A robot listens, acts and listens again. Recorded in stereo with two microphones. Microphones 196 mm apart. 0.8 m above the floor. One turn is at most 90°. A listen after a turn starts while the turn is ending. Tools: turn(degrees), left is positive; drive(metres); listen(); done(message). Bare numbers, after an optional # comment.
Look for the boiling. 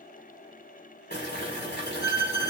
# The boiling: about 55° left or 125° left.
turn(55)
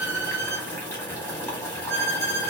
# So it is at 10° left.
turn(10)
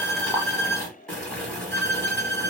done("Found it: boiling, straight ahead.")